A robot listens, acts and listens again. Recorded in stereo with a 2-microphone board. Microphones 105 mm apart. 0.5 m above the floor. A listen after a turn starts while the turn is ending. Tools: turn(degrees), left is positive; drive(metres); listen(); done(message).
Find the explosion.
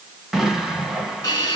turn(degrees=-30)
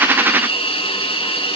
listen()
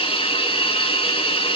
done("I heard an explosion, but can't make it out now. It was about 25° left or 145° right.")